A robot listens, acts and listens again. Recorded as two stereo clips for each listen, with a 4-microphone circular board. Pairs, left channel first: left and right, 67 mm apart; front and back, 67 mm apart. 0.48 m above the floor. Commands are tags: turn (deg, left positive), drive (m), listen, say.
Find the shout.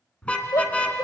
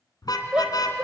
<turn deg="105"/>
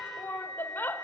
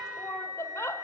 <turn deg="35"/>
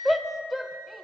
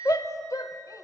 <say>Found it: a shout, straight ahead, 1 to 2 m away.</say>